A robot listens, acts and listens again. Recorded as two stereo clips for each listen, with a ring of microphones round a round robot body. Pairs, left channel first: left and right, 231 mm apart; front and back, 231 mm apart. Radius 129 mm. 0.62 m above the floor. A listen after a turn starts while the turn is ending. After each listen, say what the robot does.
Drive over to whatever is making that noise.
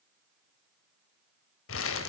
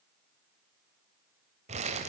Turn 115° left.
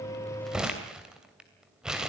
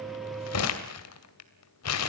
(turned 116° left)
Drive 1.0 m forward.
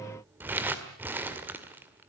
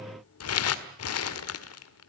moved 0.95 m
Turn 10° right.
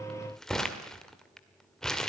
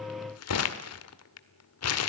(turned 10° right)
Drive 1.0 m forward.
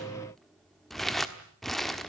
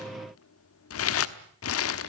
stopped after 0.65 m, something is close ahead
I am next to the crumpling.